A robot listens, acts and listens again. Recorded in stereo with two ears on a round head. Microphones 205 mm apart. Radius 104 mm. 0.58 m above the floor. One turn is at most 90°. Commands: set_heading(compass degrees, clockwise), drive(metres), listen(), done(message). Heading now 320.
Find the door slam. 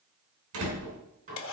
set_heading(25)
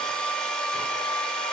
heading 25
listen()
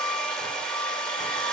done("I heard a door slam, but can't make it out now. It was about straight ahead or 50° right.")